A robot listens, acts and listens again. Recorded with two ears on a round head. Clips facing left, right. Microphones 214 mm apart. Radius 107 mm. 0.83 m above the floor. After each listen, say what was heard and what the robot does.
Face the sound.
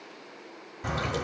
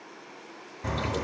The splash: about 15° left or 165° left. Turn 15° left.
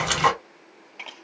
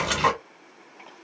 So it is at 150° left. Turn 150° left.
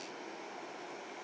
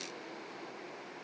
Facing where the splash came from. I can't hear it now.